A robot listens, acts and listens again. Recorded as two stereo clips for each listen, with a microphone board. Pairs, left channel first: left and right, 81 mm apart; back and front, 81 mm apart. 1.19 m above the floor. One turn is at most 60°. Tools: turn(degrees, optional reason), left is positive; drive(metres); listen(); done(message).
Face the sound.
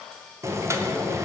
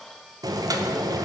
turn(degrees=-35, reason="The boiling: 35° right.")
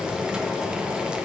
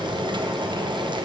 turn(degrees=-10, reason="The boiling is now 10° right.")
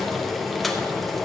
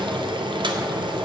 done("Facing the boiling.")